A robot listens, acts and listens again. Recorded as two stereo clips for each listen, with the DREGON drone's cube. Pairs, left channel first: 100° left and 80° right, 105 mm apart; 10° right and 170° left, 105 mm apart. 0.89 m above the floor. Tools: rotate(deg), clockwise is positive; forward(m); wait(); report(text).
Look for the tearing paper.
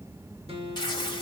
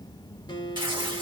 rotate(-135)
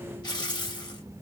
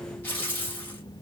rotate(-60)
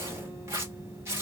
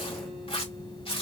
rotate(20)
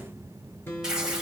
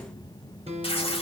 report("Found it: tearing paper, straight ahead, 1 to 2 m away.")